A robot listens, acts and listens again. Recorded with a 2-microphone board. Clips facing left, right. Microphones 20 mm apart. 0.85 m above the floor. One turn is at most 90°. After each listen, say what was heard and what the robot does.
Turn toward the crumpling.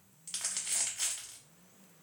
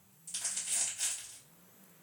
The crumpling: about 55° left or 125° left. Turn 55° left.
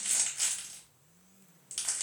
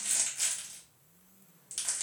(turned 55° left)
So it is at 15° left. Turn 15° left.
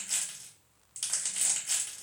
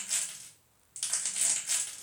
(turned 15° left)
Found it: crumpling, straight ahead, 1 to 2 m away.